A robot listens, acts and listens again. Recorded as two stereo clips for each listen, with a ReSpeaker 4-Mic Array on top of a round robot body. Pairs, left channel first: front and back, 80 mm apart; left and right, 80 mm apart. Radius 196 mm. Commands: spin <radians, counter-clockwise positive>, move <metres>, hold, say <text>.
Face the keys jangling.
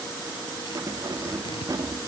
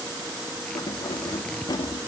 spin 2.27
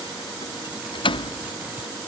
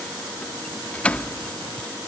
spin 0.26
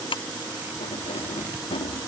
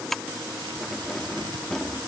say Facing the keys jangling.